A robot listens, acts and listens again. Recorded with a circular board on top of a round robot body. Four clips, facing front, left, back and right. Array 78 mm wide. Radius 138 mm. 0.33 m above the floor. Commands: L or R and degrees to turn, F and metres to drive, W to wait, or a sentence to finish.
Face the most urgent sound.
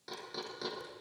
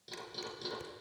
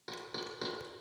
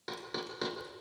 W
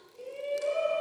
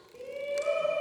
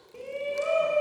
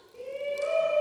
L175
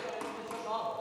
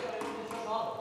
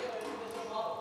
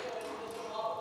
L50
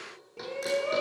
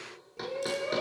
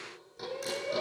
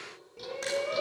R10
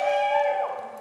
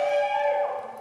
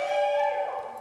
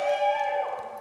Facing the shout.